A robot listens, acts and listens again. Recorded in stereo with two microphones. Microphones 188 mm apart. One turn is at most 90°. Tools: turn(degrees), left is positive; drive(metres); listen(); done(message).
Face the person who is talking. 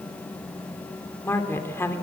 turn(degrees=30)
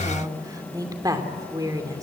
turn(degrees=-20)
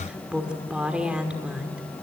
done("Facing the woman speaking.")